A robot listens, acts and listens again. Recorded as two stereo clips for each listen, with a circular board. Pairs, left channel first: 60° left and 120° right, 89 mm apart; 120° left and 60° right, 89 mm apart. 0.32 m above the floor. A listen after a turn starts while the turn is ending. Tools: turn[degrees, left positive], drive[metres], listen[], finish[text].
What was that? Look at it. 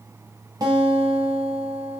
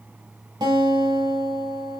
Thought: The guitar: 85° right.
Action: turn[-85]
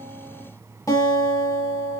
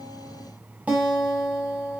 Thought: The guitar is now 15° left.
Action: turn[15]
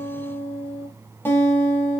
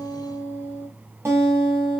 Action: finish[Facing the guitar.]